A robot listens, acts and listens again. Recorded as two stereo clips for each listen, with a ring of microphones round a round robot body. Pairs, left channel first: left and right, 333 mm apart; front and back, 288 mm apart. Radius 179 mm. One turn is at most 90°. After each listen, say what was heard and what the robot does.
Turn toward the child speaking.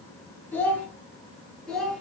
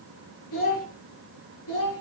Facing the child speaking.